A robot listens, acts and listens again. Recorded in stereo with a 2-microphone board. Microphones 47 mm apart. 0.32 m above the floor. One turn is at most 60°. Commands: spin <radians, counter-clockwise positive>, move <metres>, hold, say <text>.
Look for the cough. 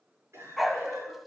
spin -1.05
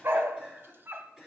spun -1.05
spin -0.44
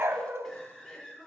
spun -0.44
say Found it: a cough, straight ahead, over 4 m away.